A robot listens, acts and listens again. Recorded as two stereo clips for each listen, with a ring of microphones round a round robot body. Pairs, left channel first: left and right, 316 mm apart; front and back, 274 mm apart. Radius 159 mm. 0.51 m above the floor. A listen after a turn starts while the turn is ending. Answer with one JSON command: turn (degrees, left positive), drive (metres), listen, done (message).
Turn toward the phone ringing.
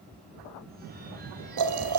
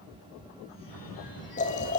{"turn": -25}
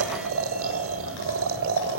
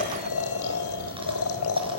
{"listen": true}
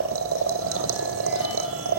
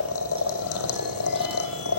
{"listen": true}
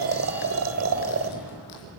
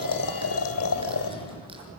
{"done": "I heard a phone ringing from this way, but can't make it out now."}